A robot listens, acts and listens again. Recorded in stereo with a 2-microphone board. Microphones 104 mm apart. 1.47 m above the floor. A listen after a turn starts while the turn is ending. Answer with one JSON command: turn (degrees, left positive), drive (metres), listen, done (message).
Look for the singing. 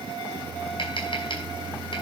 {"listen": true}
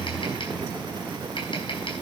{"listen": true}
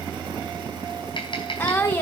{"turn": 20}
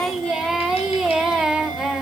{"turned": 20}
{"done": "Found it: singing, straight ahead."}